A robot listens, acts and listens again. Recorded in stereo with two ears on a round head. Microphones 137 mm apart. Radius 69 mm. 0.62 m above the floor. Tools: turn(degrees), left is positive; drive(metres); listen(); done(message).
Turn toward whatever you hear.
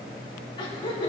turn(degrees=35)
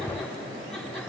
listen()
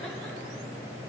listen()
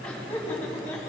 turn(degrees=15)
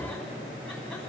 listen()
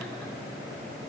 listen()
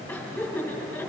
turn(degrees=10)
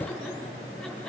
listen()
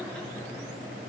listen()
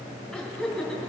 done("Facing the laughter, over 4 m away.")